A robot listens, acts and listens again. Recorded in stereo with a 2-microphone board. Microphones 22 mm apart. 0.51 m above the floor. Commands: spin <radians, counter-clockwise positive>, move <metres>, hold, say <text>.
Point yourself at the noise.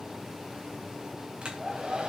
spin -0.87
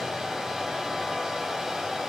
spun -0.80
spin -0.17
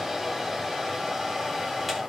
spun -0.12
say Found it: a hair dryer, straight ahead, over 4 m away.